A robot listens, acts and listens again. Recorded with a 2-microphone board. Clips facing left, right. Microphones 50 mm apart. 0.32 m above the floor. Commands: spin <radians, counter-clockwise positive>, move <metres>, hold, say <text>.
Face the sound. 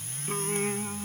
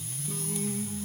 spin 1.31
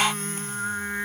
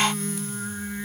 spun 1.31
spin 0.79
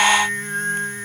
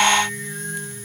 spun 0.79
spin 0.96
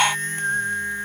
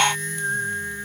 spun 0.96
spin 0.35
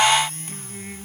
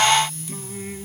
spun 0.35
spin 0.17
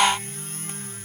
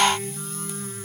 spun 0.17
hold
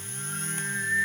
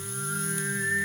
say Facing the singing.